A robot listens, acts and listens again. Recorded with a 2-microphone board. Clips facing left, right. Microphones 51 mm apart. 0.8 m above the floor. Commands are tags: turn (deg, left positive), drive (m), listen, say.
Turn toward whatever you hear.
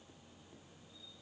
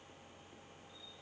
<listen/>
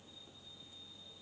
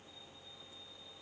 <listen/>
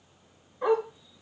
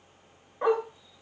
<turn deg="-45"/>
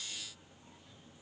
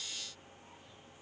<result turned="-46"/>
<listen/>
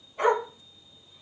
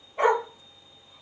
<turn deg="-30"/>
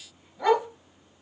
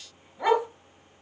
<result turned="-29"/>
<turn deg="-15"/>
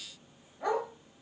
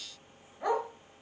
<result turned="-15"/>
<say>Facing the dog barking, 1 to 2 m away.</say>